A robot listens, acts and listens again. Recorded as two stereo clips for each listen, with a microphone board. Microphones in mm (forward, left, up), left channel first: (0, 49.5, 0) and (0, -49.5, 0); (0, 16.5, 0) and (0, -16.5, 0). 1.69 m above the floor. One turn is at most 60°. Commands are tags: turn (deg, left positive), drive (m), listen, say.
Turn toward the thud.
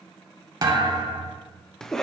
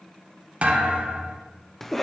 <turn deg="-45"/>
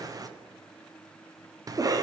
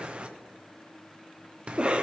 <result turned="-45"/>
<listen/>
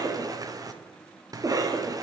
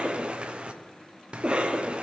<say>I heard a thud, but can't make it out now. It was about straight ahead or 90° right.</say>